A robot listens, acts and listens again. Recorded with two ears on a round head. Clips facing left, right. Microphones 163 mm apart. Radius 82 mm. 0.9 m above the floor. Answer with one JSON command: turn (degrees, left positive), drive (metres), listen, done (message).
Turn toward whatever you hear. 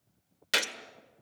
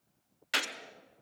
{"turn": 50}
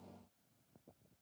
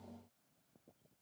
{"listen": true}
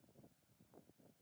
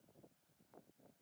{"done": "I heard a gunshot, but can't make it out now. It was about straight ahead or 80° left."}